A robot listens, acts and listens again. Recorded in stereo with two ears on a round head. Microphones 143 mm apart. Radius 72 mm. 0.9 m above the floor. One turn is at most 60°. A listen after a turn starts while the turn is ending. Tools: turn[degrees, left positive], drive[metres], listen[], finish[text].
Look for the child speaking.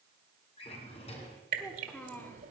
Action: turn[30]
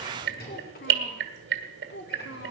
Thought: So it is at 100° left.
Action: turn[60]
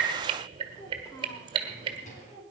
Thought: The child speaking is now 10° left.
Action: turn[10]
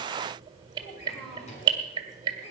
Action: listen[]
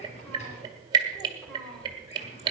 Action: finish[Found it: a child speaking, straight ahead.]